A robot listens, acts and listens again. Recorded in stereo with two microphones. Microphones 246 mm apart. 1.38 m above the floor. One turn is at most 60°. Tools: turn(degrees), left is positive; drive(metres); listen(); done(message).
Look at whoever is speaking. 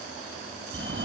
listen()
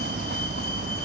listen()
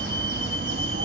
done("I can't make out anyone speaking to turn to.")